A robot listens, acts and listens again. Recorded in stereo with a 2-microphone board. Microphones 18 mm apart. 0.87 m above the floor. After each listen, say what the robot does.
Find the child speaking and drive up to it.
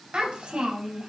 Turn 90° right.
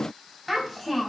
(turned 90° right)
Turn 10° left.
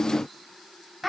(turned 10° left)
Drive 1.0 m forward.
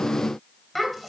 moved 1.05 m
Turn 10° left.
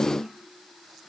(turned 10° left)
Keep listening.
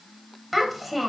Drive 1.0 m forward.
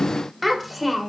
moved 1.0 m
Drive 1.0 m forward.
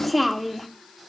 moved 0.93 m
Drive 1.0 m forward.
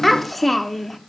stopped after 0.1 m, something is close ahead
Turn 10° left.
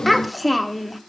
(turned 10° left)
Arrived at the child speaking, straight ahead.